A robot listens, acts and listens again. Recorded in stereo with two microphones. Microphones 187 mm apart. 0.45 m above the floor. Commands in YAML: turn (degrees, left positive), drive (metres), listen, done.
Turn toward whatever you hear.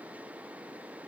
listen: true
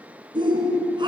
turn: -25
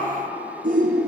turn: -130
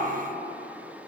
listen: true
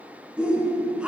done: "Found it: a shout, straight ahead."